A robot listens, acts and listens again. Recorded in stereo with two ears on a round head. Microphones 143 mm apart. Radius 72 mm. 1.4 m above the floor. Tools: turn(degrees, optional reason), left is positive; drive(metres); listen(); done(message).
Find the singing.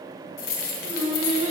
turn(degrees=-40, reason="The singing: about 40° right or 140° right.")
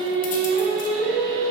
turn(degrees=-95, reason="So it is at 95° right.")
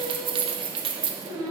turn(degrees=15, reason="The singing is now 15° left.")
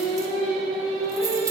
done("Found it: singing, straight ahead.")